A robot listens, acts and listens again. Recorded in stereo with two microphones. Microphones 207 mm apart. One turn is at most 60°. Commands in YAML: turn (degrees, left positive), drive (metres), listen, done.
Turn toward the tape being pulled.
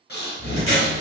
turn: -35
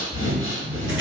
listen: true
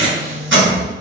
turn: -60
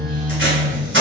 turn: -60
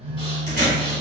turn: -20
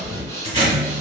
turn: -30
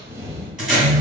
done: "Found it: tape being pulled, straight ahead, 1 to 2 m away."